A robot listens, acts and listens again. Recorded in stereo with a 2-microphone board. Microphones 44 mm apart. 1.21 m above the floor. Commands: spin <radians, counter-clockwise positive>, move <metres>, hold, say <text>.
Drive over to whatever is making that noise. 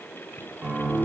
spin -0.61
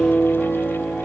move 1.0
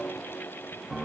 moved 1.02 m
move 1.0
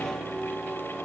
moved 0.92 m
spin -0.17
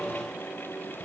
hold
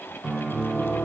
move 1.0
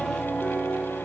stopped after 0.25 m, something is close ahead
say Arrived at the piano, straight ahead.